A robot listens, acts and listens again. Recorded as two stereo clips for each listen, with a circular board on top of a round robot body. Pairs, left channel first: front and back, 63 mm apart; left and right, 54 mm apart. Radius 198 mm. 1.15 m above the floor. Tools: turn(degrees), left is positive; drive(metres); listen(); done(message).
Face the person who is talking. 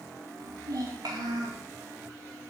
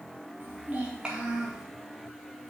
turn(degrees=-170)
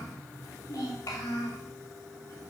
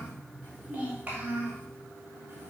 turn(degrees=-30)
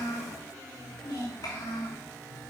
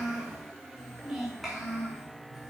done("Facing the child speaking.")